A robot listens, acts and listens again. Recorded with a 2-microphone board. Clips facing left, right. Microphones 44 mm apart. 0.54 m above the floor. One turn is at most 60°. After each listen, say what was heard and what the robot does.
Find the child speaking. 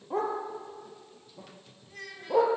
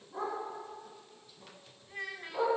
The child speaking: about 20° right or 160° right. Turn 20° right.
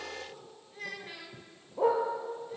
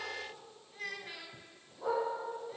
Found it: a child speaking, straight ahead.